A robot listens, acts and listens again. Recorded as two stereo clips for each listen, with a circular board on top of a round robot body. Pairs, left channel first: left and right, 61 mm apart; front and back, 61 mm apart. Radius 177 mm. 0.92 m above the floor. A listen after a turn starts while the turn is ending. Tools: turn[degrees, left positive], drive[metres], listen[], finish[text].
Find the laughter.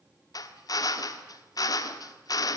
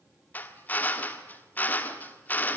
Action: listen[]
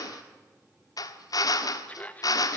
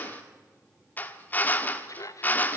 Thought: The laughter: 25° left.
Action: turn[25]
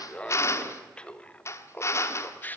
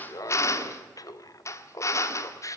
Thought: The laughter is now 30° left.
Action: turn[30]
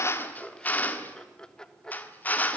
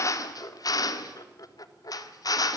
Thought: The laughter is now 15° left.
Action: turn[15]
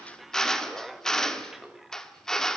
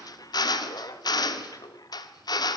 Action: finish[Facing the laughter, 2 to 4 m away.]